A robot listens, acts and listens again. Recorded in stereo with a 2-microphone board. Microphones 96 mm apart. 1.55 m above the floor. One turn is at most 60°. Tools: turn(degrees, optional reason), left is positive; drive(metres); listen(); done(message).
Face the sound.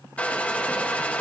turn(degrees=30)
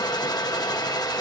turn(degrees=60, reason="So it is at 135° left.")
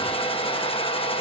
turn(degrees=60, reason="The hair dryer is now 75° left.")
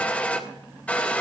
turn(degrees=15, reason="The hair dryer is now 15° left.")
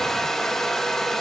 done("Facing the hair dryer.")